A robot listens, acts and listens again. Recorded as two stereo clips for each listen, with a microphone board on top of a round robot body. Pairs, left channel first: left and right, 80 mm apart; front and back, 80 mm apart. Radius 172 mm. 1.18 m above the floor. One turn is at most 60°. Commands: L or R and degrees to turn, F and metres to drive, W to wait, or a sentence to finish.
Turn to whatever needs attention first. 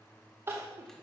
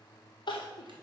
R30
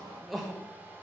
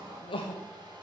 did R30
Facing the crying.